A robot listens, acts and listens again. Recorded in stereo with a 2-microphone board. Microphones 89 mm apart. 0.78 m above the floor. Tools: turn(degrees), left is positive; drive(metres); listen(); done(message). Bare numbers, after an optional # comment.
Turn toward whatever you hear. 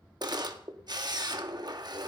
# The camera shutter: about 50° right or 130° right.
turn(-50)
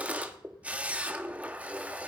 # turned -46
# So it is at 20° right.
turn(-20)
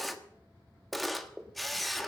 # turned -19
done("Facing the camera shutter, 1 to 2 m away.")